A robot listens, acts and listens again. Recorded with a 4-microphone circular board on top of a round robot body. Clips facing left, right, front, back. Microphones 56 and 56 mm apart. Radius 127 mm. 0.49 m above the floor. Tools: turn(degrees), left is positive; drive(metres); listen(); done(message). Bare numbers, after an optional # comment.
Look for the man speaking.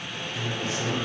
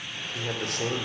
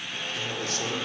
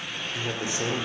# The man speaking: 110° right.
turn(-110)
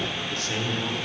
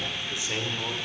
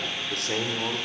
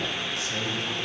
# The man speaking is now 15° right.
turn(-15)
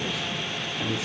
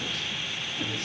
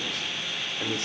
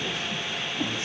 listen()
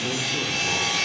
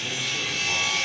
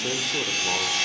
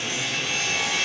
listen()
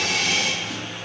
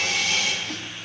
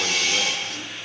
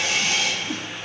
done("I heard a man speaking from this way, but can't make it out now.")